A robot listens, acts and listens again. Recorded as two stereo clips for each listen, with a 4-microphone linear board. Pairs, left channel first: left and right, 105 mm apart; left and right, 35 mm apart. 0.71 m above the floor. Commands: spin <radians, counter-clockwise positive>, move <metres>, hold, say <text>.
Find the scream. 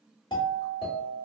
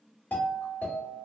hold
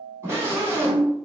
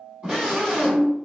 spin -0.52
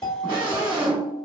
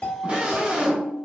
spin -2.01
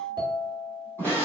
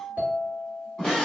spin 0.44
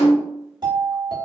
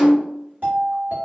spin 0.35
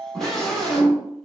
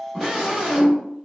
say Found it: a scream, straight ahead.